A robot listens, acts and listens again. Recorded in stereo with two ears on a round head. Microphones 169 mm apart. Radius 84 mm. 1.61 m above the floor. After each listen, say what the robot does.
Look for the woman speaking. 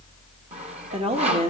Turn 35° right.
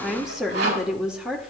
Facing the woman speaking.